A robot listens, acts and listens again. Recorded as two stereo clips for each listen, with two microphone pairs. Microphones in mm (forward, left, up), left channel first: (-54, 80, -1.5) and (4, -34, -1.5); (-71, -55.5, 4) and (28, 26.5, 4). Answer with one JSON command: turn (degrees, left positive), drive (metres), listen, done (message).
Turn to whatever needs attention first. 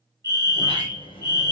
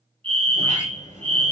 {"done": "Facing the fire alarm."}